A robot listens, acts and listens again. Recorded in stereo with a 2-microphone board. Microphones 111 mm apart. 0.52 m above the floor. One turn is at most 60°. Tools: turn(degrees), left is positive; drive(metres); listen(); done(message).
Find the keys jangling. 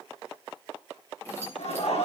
turn(degrees=20)
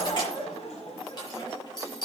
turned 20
turn(degrees=60)
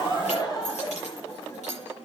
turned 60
turn(degrees=60)
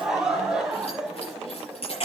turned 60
turn(degrees=60)
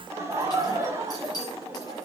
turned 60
turn(degrees=35)
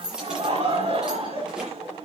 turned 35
done("Found it: keys jangling, straight ahead.")